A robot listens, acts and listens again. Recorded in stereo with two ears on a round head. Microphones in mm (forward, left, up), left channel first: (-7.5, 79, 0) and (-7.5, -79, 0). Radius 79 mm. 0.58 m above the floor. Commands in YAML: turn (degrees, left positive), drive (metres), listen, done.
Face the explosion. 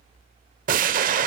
turn: -50
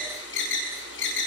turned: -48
listen: true
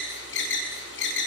done: "I heard an explosion, but can't make it out now. It was about straight ahead or 80° right."